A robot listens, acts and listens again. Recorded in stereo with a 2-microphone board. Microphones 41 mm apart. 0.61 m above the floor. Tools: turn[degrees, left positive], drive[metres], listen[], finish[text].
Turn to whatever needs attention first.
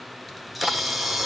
Action: listen[]
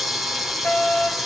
Thought: The fire alarm: about 65° left or 115° left.
Action: turn[65]
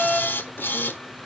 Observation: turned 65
Thought: So it is at 15° left.
Action: turn[15]
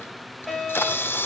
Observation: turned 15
Action: finish[Facing the fire alarm, over 4 m away.]